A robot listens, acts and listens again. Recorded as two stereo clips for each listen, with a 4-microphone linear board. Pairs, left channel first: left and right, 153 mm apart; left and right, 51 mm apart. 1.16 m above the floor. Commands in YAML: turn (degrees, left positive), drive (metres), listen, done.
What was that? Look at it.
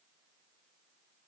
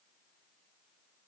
listen: true
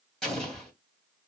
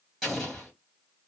turn: 30
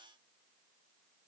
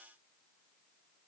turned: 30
listen: true
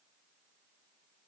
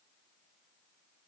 done: "I heard an explosion, but can't make it out now. It was about 25° right or 145° left."